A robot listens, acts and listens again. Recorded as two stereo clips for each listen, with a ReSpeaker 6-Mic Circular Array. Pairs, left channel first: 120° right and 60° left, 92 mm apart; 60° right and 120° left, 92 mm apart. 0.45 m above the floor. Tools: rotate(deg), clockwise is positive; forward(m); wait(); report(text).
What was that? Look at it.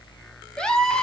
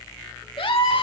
rotate(40)
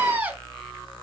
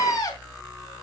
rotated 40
rotate(10)
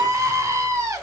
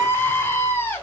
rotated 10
report("Facing the scream.")